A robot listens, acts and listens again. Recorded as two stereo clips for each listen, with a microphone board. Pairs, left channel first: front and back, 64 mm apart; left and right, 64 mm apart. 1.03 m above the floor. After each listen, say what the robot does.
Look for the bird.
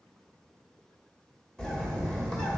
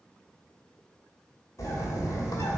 Turn 80° left.
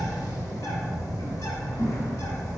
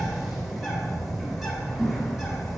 Facing the bird.